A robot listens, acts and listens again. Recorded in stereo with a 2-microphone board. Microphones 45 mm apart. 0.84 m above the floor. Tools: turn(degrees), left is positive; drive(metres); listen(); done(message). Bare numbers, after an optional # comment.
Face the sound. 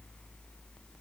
listen()
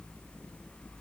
listen()
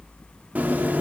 # The chewing: about 35° right or 145° right.
turn(-35)
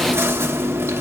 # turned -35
# So it is at 105° right.
turn(-105)
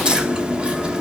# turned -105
# The chewing is now 20° right.
turn(-20)
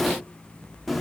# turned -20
done("Found it: chewing, straight ahead.")